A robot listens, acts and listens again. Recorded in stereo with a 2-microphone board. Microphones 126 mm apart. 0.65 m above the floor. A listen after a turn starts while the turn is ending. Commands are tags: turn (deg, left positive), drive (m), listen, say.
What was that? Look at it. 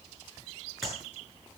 <turn deg="30"/>
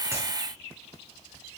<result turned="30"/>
<listen/>
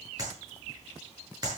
<turn deg="-30"/>
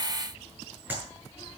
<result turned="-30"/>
<turn deg="-15"/>
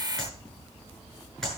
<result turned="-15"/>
<say>Found it: a clap, straight ahead, over 4 m away.</say>